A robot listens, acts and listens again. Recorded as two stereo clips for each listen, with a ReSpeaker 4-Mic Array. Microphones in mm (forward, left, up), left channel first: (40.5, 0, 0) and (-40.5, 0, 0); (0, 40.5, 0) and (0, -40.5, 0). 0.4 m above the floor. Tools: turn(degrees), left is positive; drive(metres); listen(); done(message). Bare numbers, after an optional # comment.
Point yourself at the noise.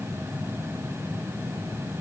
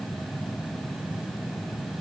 listen()
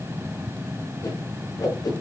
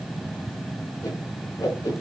# The whoosh: 40° left.
turn(40)
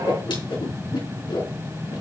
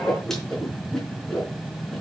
done("Facing the whoosh, over 4 m away.")